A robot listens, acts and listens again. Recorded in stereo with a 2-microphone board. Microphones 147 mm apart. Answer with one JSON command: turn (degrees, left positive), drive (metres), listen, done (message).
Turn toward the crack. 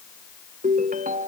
{"listen": true}
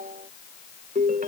{"listen": true}
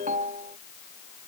{"done": "I can't make out a crack to turn to."}